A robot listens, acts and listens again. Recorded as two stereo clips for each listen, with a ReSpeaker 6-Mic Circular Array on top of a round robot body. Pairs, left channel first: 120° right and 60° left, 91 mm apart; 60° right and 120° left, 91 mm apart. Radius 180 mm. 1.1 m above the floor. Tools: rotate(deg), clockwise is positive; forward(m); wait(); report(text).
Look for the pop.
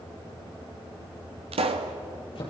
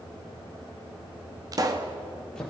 rotate(-70)
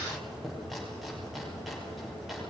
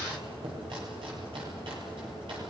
report("Facing where the pop came from. I can't hear it now.")